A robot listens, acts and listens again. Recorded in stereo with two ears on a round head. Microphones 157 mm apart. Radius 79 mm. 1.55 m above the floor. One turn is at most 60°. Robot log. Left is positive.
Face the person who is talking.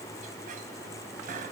cmd idle
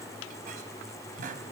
cmd idle
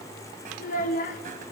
note: The child speaking: about 50° left or 130° left.
cmd yaw +50
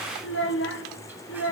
note: So it is at 75° left.
cmd yaw +60
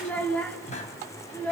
note: The child speaking is now 10° left.
cmd yaw +10
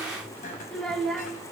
end: Facing the child speaking.